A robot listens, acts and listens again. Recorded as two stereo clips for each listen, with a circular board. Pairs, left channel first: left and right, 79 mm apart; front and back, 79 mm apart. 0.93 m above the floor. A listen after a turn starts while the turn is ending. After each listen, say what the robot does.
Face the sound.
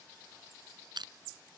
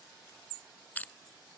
Turn 70° right.
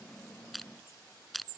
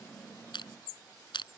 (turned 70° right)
Facing the crushing.